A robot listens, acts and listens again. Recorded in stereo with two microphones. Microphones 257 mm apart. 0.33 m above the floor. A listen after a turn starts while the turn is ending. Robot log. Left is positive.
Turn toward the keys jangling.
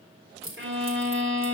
note: The keys jangling: about 55° right or 125° right.
cmd yaw -55
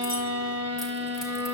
cmd idle
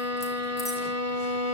cmd idle
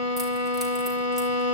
end: I heard keys jangling, but can't make it out now. It was about straight ahead or 70° right.